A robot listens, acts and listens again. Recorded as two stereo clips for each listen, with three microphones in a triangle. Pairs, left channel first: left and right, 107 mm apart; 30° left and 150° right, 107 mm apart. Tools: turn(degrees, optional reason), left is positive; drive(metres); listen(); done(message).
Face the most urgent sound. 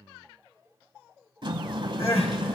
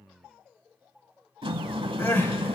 turn(degrees=100, reason="The crying: 100° left.")
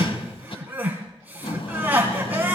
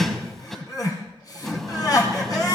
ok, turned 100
turn(degrees=-20, reason="The crying is now 20° right.")
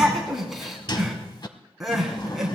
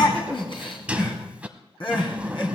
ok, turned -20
done("Found it: crying, straight ahead, 2 to 4 m away.")